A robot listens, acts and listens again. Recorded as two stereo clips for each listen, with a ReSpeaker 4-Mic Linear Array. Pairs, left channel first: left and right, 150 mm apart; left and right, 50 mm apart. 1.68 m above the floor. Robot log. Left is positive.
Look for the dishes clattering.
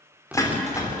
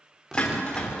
note: The dishes clattering: about 20° left or 160° left.
cmd yaw +20
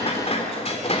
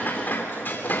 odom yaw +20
note: So it is at 135° left.
cmd yaw +135
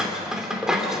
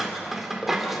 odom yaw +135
end: Found it: dishes clattering, straight ahead.